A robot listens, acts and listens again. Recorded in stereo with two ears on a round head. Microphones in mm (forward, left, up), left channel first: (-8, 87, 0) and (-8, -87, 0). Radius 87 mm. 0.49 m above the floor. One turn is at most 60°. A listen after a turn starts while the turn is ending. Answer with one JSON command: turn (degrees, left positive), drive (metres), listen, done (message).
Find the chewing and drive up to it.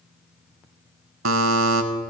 {"listen": true}
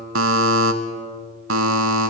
{"listen": true}
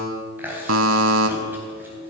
{"turn": -30}
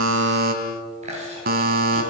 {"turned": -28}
{"turn": -60}
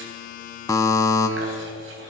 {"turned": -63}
{"turn": -60}
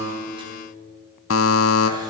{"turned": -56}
{"turn": -20}
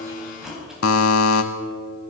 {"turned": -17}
{"drive": 1.0}
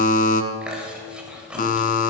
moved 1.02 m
{"drive": 1.0}
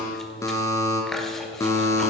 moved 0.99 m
{"drive": 1.0}
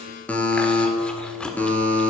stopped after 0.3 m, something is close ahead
{"done": "Arrived at the chewing, straight ahead."}